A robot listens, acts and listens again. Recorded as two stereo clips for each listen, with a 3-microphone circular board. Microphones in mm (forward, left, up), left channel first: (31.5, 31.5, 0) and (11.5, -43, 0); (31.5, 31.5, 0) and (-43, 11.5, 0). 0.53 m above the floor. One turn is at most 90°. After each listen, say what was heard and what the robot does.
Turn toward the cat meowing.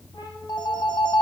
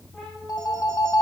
The cat meowing: 105° left. Turn 90° left.
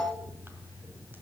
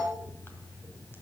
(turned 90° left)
Nothing new. It was at 15° left. Turn 15° left.
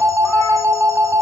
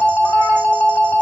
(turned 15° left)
Keep listening.
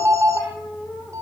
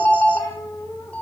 The cat meowing is now 10° right. Turn 10° right.
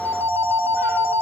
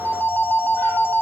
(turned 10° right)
Keep listening.
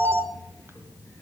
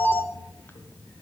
Keep listening.
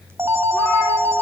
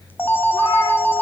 I heard a cat meowing from this way, but can't make it out now.